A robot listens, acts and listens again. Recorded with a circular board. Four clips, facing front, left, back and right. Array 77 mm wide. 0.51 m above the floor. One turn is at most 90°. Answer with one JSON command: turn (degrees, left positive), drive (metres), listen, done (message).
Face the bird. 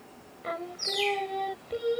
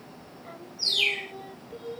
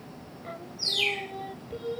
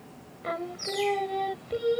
{"turn": 90}
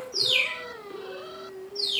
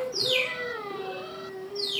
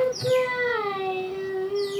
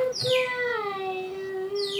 {"turn": 15}
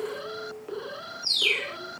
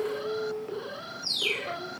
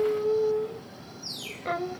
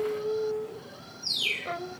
{"done": "Found it: a bird, straight ahead."}